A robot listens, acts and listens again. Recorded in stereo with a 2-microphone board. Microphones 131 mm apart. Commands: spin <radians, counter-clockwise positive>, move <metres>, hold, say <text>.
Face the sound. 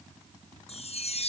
spin 0.87
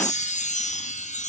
spin 1.31
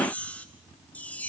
spin 0.17
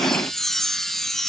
say Found it: a chime, straight ahead.